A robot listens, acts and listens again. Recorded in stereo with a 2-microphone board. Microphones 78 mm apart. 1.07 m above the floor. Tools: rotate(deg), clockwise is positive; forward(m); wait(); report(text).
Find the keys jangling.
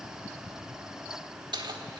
rotate(90)
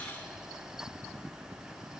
wait()
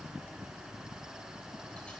wait()
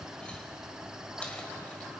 report("I heard keys jangling from this way, but can't make it out now.")